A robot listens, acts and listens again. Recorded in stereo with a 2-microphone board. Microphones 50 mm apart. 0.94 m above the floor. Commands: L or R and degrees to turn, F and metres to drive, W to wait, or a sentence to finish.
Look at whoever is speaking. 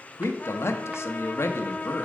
L65
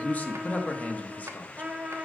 L35
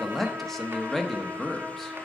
Found it: a man speaking, straight ahead.